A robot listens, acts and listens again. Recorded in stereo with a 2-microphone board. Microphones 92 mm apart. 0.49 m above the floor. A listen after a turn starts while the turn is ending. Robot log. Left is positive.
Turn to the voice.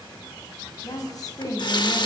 note: The woman speaking: about 45° left or 135° left.
cmd yaw +45
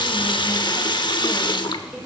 cmd idle
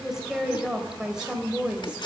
note: So it is at 10° right.
cmd yaw -10
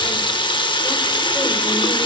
cmd idle
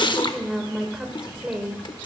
note: The woman speaking is now 10° right.
cmd yaw -10
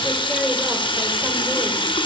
cmd idle
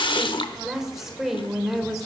end: Facing the woman speaking, 2 to 4 m away.